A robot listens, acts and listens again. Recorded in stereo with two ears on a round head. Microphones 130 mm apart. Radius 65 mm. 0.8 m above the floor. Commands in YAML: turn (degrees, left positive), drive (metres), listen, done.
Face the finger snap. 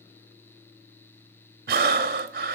listen: true
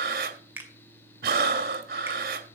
turn: -30
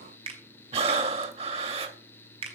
turn: -140
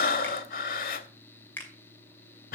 turn: 15
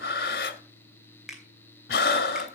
done: "Found it: a finger snap, straight ahead, 2 to 4 m away."